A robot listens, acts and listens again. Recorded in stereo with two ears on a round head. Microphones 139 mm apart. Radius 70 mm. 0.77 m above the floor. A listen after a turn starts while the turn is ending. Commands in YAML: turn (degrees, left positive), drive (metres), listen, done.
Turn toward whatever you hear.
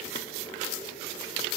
listen: true
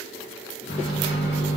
turn: 75
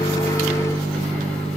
done: "Facing the microwave, 1 to 2 m away."